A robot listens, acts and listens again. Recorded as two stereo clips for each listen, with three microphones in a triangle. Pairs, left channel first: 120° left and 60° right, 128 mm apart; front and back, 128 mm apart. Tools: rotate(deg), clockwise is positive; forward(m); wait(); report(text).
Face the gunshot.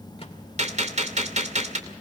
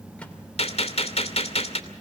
rotate(35)
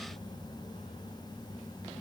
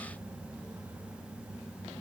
report("I heard a gunshot from this way, but can't make it out now.")